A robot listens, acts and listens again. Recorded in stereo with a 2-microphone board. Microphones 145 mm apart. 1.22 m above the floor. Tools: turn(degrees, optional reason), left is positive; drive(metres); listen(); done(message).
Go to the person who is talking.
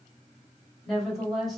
turn(degrees=30)
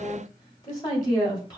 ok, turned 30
turn(degrees=150, reason="So it is at 150° left.")
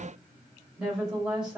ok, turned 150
drive(metres=1.0)
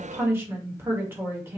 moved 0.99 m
turn(degrees=-15, reason="The woman speaking is now 15° right.")
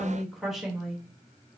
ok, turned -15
drive(metres=1.0)
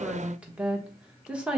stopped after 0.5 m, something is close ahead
done("I am next to the woman speaking.")